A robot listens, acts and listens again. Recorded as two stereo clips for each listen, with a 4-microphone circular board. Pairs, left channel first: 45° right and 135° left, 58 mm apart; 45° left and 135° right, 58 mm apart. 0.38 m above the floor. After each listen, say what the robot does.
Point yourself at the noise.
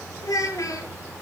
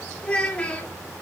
Turn 25° right.
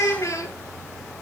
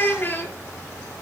Turn 10° right.
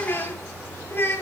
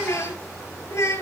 Turn 10° left.
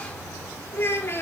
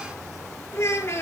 Facing the child speaking, over 4 m away.